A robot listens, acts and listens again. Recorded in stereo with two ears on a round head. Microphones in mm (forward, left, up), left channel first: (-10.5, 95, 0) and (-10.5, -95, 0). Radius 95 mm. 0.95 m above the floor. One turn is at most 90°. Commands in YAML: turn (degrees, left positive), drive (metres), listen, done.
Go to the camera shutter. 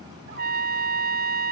listen: true
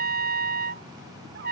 listen: true
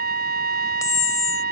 turn: 15
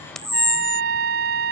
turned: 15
drive: 1.0
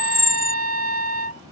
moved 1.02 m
drive: 1.0
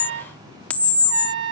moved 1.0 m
drive: 1.0
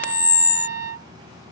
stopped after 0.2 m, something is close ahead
done: "Arrived at the camera shutter, straight ahead."